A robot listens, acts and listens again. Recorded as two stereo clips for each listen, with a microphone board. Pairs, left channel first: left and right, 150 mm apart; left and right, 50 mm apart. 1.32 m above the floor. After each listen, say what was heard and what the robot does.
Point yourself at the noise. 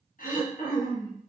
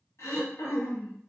The throat clearing: about 65° left or 115° left. Turn 65° left.
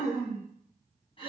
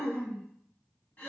So it is at 40° left. Turn 40° left.
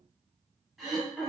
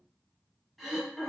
Facing the throat clearing, under 1 m away.